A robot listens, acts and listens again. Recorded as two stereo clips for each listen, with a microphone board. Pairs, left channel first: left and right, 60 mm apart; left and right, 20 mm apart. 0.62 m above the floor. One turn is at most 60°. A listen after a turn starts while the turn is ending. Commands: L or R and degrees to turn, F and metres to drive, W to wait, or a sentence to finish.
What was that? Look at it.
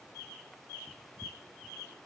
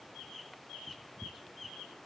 W
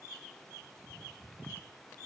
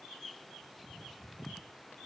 W
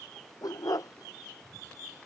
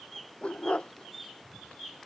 L60
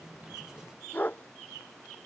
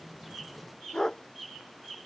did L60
L30
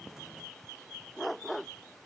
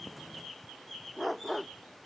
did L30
Facing the dog barking.